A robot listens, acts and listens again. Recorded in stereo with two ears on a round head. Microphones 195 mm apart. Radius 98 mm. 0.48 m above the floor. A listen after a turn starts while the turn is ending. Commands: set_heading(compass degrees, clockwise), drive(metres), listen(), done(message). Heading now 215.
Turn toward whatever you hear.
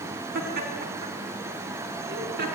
set_heading(260)
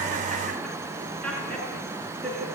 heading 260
done("Found it: laughter, straight ahead.")